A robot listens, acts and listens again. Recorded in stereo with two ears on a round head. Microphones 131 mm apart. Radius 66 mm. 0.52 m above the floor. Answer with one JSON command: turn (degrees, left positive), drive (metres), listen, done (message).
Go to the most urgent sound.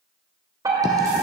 {"turn": -25}
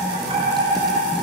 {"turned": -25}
{"turn": -125}
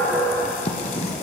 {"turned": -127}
{"drive": 1.0}
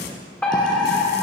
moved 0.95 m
{"turn": 10}
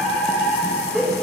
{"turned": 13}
{"drive": 1.0}
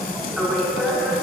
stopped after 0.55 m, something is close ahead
{"done": "I am next to the fire alarm."}